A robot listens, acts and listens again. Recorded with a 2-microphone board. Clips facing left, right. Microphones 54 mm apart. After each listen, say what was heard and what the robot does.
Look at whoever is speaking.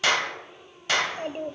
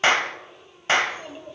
The child speaking: about 50° left or 130° left. Turn 50° left.
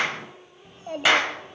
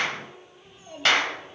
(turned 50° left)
So it is at 70° left. Turn 70° left.
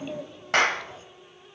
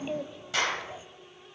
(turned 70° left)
The child speaking is now 20° right. Turn 20° right.
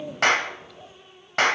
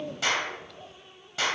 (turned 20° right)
Facing the child speaking.